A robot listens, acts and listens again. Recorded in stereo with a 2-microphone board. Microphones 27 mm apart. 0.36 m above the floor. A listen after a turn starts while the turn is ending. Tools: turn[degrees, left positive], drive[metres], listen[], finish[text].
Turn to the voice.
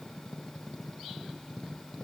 Action: listen[]
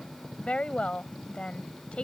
Thought: The woman speaking: about 45° left or 135° left.
Action: turn[45]
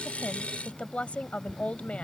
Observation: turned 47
Thought: So it is at 75° left.
Action: turn[75]
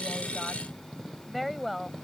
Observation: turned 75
Action: finish[Facing the woman speaking.]